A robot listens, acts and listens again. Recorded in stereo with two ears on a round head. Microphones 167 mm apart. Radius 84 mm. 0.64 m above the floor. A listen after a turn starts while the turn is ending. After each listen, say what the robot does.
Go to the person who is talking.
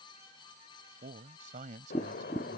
Turn 45° right.
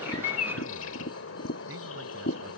Keep listening.
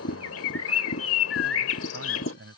Turn 95° right.
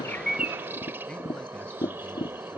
Keep listening.
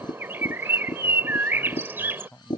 Drive 1.0 m forward.
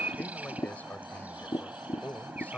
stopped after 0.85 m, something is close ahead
Turn 10° left.
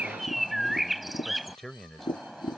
Blocked. The man speaking is further on, straight ahead.